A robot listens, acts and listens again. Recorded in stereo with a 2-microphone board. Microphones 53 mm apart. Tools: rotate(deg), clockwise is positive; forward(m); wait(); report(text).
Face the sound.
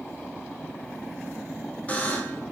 rotate(-25)
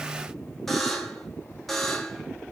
report("Facing the buzzer.")